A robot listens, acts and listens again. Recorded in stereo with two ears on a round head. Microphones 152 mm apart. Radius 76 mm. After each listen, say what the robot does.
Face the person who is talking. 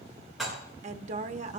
Turn 40° right.
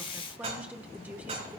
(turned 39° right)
Turn 10° right.
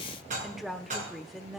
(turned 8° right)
Found it: a woman speaking, straight ahead.